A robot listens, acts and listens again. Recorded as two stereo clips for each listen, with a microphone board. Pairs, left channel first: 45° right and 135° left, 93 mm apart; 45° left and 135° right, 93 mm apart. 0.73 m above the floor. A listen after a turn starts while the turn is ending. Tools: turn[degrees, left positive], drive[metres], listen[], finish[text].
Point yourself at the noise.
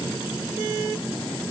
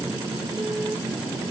Action: listen[]
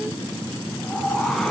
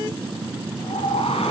Thought: The whoosh: 40° left.
Action: turn[40]
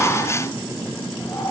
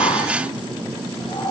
Thought: The whoosh is now 15° left.
Action: turn[15]
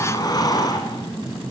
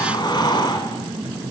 Action: finish[Facing the whoosh.]